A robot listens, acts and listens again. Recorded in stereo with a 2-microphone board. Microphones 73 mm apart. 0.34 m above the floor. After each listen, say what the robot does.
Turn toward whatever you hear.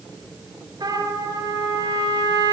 Turn 90° right.
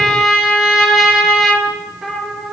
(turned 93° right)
Found it: a trumpet, straight ahead.